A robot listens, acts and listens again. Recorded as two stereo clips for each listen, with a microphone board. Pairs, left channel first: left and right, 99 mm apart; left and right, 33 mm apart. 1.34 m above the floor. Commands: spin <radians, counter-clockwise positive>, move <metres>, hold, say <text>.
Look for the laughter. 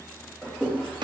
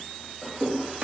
spin 0.52
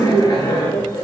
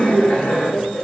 spin 2.27
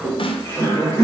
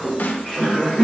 spin 0.44
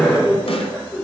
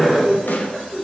spin 0.26
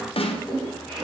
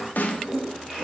say Found it: laughter, straight ahead, over 4 m away.